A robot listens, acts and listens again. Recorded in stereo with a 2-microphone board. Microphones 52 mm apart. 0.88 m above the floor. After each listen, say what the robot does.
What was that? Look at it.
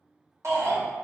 Turn 65° right.
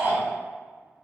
Turn 50° right.
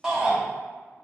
Turn 15° right.
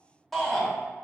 Facing the shout.